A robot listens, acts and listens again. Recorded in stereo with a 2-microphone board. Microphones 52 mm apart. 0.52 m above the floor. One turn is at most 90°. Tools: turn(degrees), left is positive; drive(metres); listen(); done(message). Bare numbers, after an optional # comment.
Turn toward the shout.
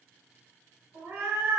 listen()
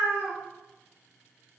listen()
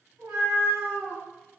done("I can't make out a shout, only a cat meowing.")